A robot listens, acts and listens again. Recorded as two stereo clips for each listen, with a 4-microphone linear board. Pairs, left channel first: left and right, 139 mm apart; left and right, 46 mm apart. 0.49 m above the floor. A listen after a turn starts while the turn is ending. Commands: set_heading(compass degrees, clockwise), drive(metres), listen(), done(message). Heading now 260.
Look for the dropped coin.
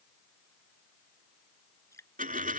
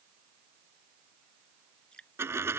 set_heading(335)
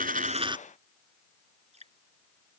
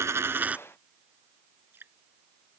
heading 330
set_heading(5)
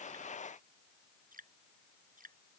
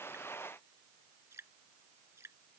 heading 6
done("I heard a dropped coin from this way, but can't make it out now.")